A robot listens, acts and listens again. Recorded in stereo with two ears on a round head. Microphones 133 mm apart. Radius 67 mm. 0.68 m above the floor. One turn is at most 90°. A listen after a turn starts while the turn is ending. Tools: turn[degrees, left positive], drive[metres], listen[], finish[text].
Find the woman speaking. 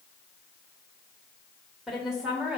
Action: turn[-30]
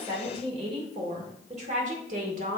Thought: So it is at 115° right.
Action: turn[-90]
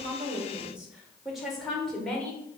Action: finish[Facing the woman speaking.]